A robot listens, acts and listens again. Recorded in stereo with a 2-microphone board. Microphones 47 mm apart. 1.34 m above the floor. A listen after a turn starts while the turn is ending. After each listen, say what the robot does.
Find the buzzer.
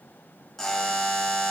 Turn 30° left.
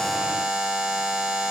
Turn 20° right.
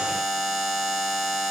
Found it: a buzzer, straight ahead, 1 to 2 m away.